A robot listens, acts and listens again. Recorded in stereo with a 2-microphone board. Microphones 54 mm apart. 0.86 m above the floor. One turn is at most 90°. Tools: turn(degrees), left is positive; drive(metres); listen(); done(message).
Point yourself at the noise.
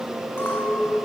turn(degrees=50)
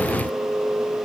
turn(degrees=80)
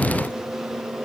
listen()
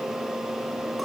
listen()
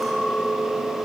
done("Found it: a clink, straight ahead, over 4 m away.")